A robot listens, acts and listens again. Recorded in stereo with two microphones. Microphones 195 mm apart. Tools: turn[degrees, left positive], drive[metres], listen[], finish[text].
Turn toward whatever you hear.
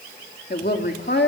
Thought: The woman speaking: about 60° left or 120° left.
Action: turn[60]
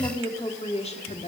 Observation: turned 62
Thought: So it is at 40° left.
Action: turn[40]
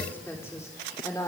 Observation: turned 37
Thought: The woman speaking is now 20° left.
Action: turn[20]
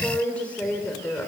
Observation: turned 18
Thought: The woman speaking is now 10° left.
Action: turn[10]
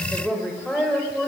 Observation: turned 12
Action: finish[Facing the woman speaking.]